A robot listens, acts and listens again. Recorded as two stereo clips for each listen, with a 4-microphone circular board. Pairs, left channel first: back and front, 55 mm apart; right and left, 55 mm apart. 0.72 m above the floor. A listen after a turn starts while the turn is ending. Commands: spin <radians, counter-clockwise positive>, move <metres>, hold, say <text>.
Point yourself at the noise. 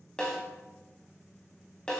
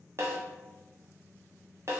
spin 1.92
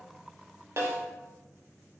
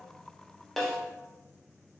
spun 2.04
say Found it: a snare drum, straight ahead, under 1 m away.